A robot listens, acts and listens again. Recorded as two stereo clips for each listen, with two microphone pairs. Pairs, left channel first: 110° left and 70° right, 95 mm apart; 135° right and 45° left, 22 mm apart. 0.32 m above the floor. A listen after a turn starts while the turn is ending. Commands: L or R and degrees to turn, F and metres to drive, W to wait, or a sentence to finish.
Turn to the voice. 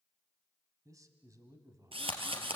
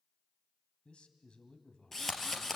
R115
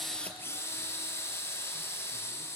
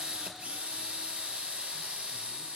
W
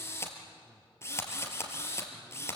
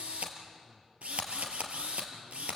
W
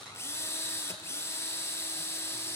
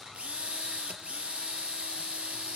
I heard a man speaking from this way, but can't make it out now.